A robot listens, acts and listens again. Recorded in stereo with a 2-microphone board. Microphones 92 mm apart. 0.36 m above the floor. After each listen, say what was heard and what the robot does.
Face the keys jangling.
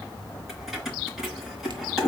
Turn 30° right.
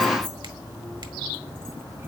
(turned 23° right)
Keep listening.
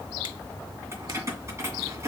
So it is at 145° right. Turn 145° right.
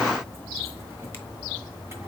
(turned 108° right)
Nothing new. It was at 40° right. Turn 40° right.
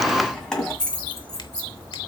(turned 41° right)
Found it: keys jangling, straight ahead, 1 to 2 m away.